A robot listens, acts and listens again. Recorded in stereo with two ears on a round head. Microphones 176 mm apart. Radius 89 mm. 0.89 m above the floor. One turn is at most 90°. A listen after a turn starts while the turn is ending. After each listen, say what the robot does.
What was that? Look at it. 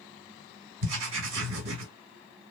Turn 65° right.
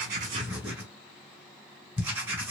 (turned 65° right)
Turn 10° right.
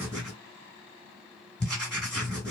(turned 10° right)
Found it: writing, straight ahead.